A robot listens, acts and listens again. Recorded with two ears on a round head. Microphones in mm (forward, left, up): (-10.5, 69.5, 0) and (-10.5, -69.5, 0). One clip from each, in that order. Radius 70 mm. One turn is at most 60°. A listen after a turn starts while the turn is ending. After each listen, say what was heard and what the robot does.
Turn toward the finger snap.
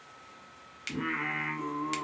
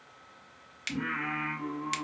Turn 30° right.
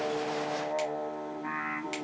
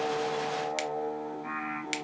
Keep listening.
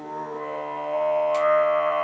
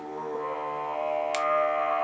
Keep listening.
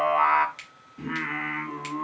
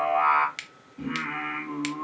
So it is at 130° right. Turn 60° right.
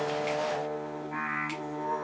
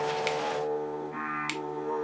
Nothing new. It was at 70° right. Turn 60° right.
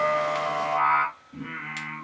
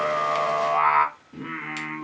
Nothing new. It was at 10° right. Turn 10° right.
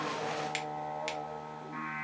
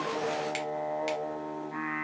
I heard a finger snap from this way, but can't make it out now.